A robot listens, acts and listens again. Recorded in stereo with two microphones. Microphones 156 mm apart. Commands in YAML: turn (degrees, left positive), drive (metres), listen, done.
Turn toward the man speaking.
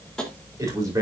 turn: -20
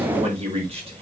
turn: -40
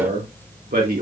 turn: -105
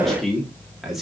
done: "Facing the man speaking, 2 to 4 m away."